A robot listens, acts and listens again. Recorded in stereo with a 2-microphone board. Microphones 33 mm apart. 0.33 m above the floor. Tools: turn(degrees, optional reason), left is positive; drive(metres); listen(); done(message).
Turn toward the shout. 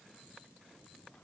listen()
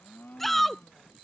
turn(degrees=30)
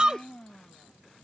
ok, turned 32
turn(degrees=-25, reason="So it is at 25° right.")
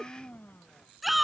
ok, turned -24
done("Found it: a shout, straight ahead.")